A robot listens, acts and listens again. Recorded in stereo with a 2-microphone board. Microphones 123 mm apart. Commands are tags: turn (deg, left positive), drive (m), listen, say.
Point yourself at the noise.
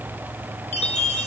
<turn deg="65"/>
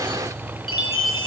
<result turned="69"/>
<turn deg="45"/>
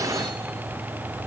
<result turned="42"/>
<listen/>
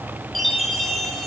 <say>Facing the chime.</say>